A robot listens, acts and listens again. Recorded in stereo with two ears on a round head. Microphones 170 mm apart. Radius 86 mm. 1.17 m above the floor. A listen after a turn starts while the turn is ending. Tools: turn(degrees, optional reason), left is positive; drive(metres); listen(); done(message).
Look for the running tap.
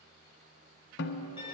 listen()
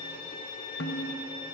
listen()
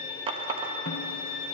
turn(degrees=-30, reason="The running tap: about 30° right or 150° right.")
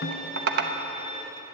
turn(degrees=-120, reason="So it is at 120° right.")
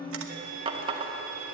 turn(degrees=-30, reason="The running tap is now 30° right.")
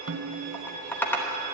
turn(degrees=10, reason="The running tap is now 10° left.")
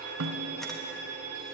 listen()
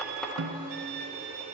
done("Facing the running tap.")